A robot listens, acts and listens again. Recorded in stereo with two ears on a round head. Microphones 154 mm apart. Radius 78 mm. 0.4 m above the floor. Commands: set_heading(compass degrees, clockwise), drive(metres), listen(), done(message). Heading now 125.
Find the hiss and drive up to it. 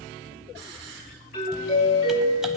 set_heading(215)
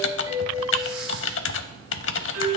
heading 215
listen()
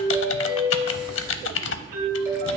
listen()
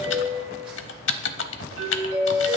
done("I heard a hiss from this way, but can't make it out now. I did not reach it.")